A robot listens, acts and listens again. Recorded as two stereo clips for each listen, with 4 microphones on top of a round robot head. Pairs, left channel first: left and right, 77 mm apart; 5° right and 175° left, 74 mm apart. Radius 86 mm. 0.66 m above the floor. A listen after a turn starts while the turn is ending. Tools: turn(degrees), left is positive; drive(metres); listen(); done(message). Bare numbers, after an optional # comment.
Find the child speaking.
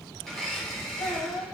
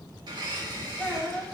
# The child speaking: 80° left.
turn(80)
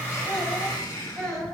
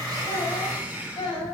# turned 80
done("Found it: a child speaking, straight ahead, 2 to 4 m away.")